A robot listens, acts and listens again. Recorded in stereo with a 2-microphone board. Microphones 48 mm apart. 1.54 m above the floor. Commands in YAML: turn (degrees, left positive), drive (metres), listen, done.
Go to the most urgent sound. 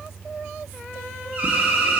turn: -30
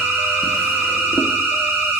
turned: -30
turn: -120
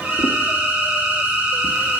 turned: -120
turn: -30
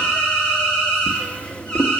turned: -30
turn: 15
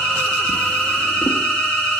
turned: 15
drive: 1.0
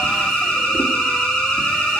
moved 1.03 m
turn: 10
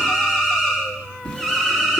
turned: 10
drive: 1.0
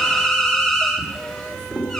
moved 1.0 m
drive: 1.0
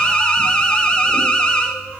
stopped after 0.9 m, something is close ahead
turn: 15
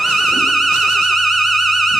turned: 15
done: "I am next to the alarm."